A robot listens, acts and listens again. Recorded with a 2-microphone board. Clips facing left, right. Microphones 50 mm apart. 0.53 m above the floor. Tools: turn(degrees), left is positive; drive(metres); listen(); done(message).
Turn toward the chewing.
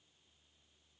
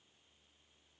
listen()
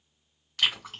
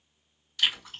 turn(degrees=65)
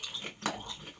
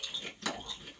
turn(degrees=40)
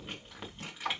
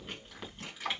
done("Found it: chewing, straight ahead, 2 to 4 m away.")